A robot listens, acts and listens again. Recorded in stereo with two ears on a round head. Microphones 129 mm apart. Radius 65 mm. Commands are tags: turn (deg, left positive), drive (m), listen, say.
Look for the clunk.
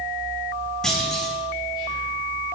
<turn deg="30"/>
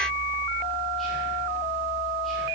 <listen/>
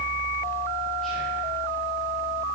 <say>I heard a clunk, but can't make it out now. It was about 25° right or 145° left.</say>